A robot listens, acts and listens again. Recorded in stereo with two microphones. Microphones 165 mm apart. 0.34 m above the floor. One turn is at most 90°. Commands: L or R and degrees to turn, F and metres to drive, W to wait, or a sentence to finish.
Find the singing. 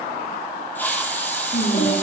L55
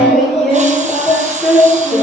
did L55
Facing the singing, over 4 m away.